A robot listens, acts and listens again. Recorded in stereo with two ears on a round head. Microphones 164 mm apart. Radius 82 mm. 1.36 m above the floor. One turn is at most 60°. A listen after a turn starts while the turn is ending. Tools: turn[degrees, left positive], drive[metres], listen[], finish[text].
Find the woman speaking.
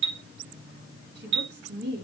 Thought: The woman speaking: about 60° right or 120° right.
Action: turn[-60]
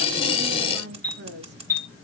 Thought: So it is at 60° right.
Action: turn[-60]
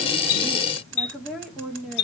Action: finish[Found it: a woman speaking, straight ahead, 1 to 2 m away.]